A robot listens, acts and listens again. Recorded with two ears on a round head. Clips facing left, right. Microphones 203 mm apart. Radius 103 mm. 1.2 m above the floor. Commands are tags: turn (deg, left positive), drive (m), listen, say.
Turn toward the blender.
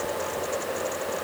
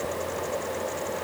<listen/>
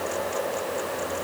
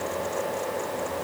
<listen/>
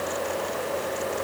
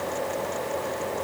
<say>I can't make out a blender.</say>